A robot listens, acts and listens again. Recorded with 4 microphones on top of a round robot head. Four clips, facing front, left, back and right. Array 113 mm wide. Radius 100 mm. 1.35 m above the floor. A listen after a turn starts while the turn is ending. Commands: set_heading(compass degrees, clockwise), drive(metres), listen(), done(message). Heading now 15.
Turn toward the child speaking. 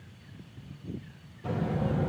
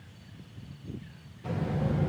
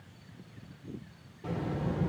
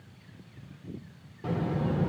set_heading(120)
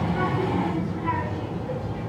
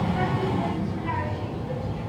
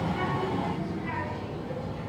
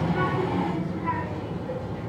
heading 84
set_heading(129)
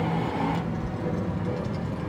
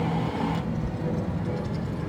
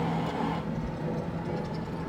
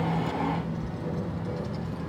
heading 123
set_heading(133)
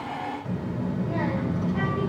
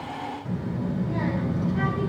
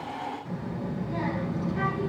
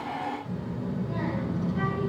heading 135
done("Found it: a child speaking, straight ahead.")